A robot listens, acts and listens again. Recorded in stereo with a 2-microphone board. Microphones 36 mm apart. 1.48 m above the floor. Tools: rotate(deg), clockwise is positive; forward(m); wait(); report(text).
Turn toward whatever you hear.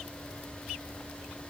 wait()
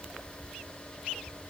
wait()
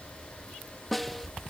rotate(-30)
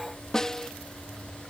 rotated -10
rotate(-165)
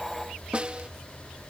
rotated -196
rotate(30)
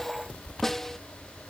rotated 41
rotate(-10)
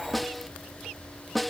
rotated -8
report("Found it: a snare drum, straight ahead.")